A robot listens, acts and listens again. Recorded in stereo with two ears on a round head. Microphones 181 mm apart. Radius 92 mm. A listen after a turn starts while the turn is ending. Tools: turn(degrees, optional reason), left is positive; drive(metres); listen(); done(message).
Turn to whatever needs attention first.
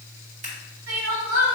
turn(degrees=-90)
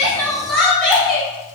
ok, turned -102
done("Facing the crying, 1 to 2 m away.")